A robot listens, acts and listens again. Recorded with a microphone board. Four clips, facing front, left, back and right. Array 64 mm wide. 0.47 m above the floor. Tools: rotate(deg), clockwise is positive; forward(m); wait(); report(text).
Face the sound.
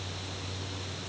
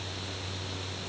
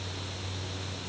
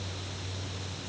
wait()
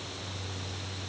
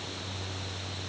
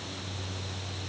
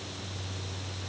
wait()
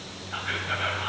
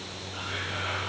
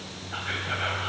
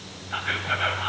rotate(85)
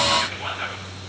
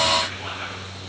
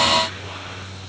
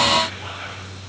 report("Facing the whispering.")